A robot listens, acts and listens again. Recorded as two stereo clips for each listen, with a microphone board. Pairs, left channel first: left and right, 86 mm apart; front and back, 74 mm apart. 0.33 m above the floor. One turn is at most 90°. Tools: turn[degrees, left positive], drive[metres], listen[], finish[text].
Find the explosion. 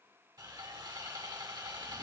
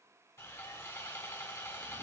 Action: listen[]
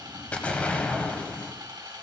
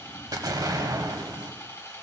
Thought: The explosion: 160° left.
Action: turn[90]
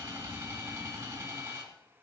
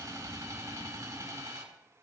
Thought: Nothing new. It was at 70° left.
Action: turn[70]
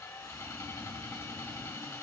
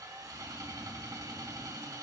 Action: finish[I heard an explosion from this way, but can't make it out now.]